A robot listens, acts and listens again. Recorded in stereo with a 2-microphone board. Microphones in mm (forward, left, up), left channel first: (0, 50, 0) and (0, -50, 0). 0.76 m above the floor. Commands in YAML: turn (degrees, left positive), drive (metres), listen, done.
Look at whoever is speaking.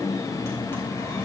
listen: true
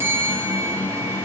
listen: true
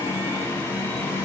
done: "I can't make out anyone speaking to turn to."